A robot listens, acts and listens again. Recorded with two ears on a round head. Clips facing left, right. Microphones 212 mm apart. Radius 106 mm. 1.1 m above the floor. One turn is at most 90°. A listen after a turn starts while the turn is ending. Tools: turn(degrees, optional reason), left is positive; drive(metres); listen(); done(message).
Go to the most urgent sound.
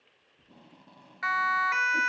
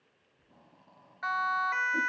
turn(degrees=40, reason="The siren: about 40° left or 140° left.")
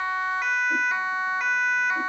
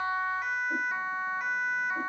turn(degrees=90, reason="So it is at 100° left.")
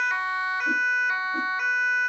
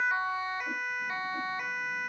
turn(degrees=15, reason="The siren is now 15° left.")
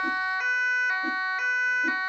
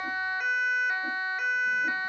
drive(metres=1.0)
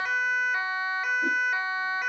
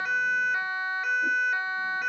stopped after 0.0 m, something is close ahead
done("Blocked. The siren is further on, straight ahead.")